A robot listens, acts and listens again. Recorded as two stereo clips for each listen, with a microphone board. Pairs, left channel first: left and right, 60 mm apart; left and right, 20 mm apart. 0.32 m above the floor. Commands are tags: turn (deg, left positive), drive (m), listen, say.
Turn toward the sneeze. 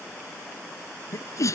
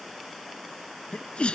<turn deg="60"/>
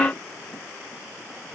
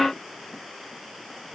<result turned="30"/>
<listen/>
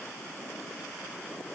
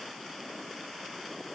<say>I heard a sneeze, but can't make it out now. It was about 30° left or 90° left.</say>